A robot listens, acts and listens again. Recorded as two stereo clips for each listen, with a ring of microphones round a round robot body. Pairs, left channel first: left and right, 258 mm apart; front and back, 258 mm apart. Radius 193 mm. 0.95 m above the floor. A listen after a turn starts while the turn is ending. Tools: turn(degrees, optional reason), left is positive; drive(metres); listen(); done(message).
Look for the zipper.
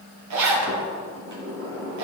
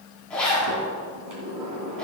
turn(degrees=-85, reason="The zipper: 85° right.")
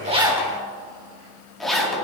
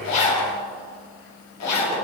done("Found it: a zipper, straight ahead.")